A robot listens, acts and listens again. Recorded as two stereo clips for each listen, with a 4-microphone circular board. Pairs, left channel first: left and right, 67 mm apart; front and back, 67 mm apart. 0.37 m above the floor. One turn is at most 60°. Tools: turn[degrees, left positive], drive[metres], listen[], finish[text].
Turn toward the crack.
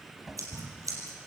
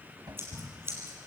Thought: The crack: 35° right.
Action: turn[-35]
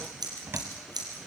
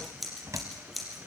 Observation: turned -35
Action: finish[Facing where the crack came from. I can't hear it now.]